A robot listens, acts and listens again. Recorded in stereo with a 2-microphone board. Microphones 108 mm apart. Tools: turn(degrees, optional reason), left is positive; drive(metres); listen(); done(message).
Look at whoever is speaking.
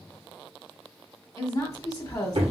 turn(degrees=35, reason="The woman speaking: about 35° left or 145° left.")
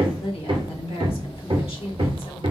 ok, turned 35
turn(degrees=105, reason="So it is at 105° left.")
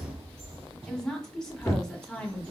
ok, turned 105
done("Found it: a woman speaking, straight ahead, 1 to 2 m away.")